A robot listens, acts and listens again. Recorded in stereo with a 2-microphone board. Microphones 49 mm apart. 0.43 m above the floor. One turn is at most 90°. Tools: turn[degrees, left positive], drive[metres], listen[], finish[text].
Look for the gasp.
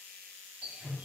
Action: listen[]
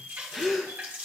Action: turn[30]
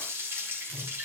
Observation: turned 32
Action: listen[]
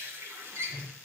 Action: finish[I heard a gasp, but can't make it out now. It was about 25° right or 140° left.]